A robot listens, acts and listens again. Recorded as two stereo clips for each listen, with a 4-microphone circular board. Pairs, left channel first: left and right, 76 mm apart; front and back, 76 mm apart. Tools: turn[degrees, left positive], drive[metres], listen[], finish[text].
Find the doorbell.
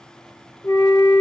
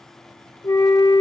Action: listen[]
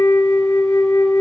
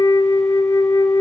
Action: listen[]
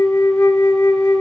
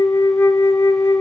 Action: finish[I can't make out a doorbell to turn to.]